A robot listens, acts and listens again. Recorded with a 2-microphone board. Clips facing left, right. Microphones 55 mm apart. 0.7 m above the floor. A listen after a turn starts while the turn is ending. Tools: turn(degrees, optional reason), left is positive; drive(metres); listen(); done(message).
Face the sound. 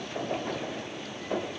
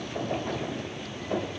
listen()
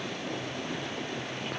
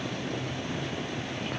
listen()
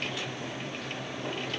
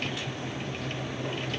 done("I can't make out anything to turn to.")